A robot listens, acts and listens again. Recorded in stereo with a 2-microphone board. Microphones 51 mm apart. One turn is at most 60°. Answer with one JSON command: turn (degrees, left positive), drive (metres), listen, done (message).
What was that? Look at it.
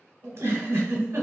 {"turn": -60}
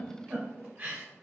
{"turn": -35}
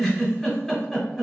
{"done": "Facing the giggle."}